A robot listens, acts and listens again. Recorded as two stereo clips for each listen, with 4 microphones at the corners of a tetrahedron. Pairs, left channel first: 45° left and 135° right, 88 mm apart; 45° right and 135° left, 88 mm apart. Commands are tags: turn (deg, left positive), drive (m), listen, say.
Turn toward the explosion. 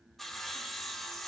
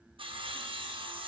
<listen/>
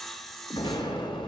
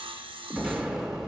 <turn deg="50"/>
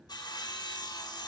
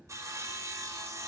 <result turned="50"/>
<say>I heard an explosion from this way, but can't make it out now.</say>